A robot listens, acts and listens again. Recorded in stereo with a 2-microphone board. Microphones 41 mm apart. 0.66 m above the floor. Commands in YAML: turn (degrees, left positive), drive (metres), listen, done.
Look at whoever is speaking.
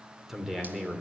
turn: -30
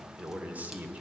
turn: -145
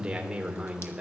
turn: -20
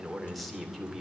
done: "Found it: a man speaking, straight ahead, 2 to 4 m away."